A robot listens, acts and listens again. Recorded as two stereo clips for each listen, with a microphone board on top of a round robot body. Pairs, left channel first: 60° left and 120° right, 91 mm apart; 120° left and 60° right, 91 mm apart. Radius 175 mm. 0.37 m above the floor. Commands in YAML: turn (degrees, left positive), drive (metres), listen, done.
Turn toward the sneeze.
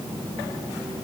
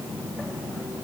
listen: true
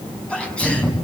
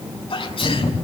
turn: 140
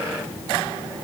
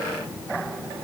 done: "I heard a sneeze from this way, but can't make it out now."